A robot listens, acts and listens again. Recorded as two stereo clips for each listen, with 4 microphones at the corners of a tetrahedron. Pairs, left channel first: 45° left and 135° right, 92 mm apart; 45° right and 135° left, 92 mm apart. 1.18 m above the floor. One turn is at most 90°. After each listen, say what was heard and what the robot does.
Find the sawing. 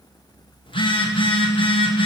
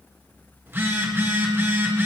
Keep listening.
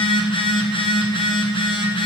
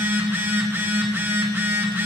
Keep listening.
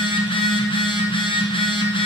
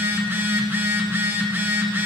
I can't make out sawing to turn to.